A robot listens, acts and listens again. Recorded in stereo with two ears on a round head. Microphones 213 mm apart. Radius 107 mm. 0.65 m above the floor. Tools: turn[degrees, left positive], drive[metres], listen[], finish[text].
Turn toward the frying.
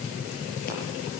Action: listen[]
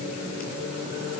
Action: listen[]
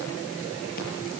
Action: finish[I can't make out frying to turn to.]